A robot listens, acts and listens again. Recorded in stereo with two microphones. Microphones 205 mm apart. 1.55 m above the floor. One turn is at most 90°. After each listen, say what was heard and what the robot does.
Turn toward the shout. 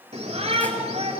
The shout: about 35° right or 145° right. Turn 35° right.
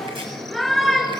Facing the shout, over 4 m away.